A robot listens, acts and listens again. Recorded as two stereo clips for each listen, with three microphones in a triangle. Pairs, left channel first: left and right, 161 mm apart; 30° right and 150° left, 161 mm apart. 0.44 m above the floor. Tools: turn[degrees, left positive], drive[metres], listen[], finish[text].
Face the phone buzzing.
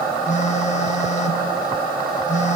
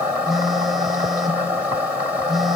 Thought: The phone buzzing: 60° left.
Action: turn[60]
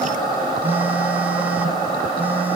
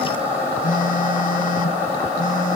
Thought: The phone buzzing is now 15° right.
Action: turn[-15]
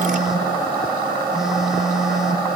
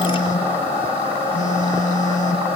Action: finish[Found it: a phone buzzing, straight ahead, 1 to 2 m away.]